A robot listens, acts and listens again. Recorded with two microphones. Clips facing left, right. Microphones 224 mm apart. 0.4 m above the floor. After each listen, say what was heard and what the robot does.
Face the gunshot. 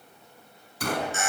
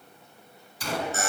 The gunshot: about 55° left or 125° left. Turn 55° left.
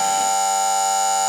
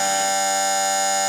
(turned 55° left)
Keep listening.
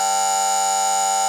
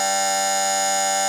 I heard a gunshot, but can't make it out now. It was about straight ahead or 70° left.